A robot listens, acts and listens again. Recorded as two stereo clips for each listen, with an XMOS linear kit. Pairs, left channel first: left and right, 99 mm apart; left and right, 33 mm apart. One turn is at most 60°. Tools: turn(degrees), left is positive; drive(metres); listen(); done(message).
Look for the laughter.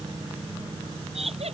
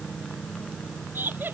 turn(degrees=-60)
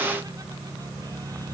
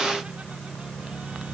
turn(degrees=-30)
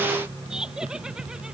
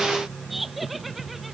done("Facing the laughter.")